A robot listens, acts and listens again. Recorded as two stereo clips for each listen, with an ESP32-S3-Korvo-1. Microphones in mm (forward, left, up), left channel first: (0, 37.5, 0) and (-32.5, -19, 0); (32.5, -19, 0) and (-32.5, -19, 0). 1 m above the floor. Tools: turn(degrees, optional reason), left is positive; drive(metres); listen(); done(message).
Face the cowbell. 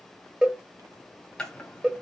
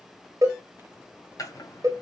turn(degrees=165, reason="The cowbell: 165° left.")
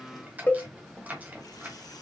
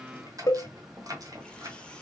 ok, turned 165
done("Found it: a cowbell, straight ahead.")